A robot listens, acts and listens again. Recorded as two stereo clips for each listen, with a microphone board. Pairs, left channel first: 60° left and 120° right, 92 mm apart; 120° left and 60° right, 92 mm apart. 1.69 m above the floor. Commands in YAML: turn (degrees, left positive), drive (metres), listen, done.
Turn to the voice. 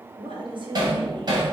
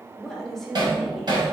turn: -150
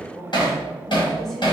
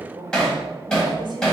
turn: -25
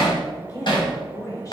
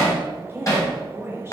done: "Found it: a woman speaking, straight ahead, 1 to 2 m away."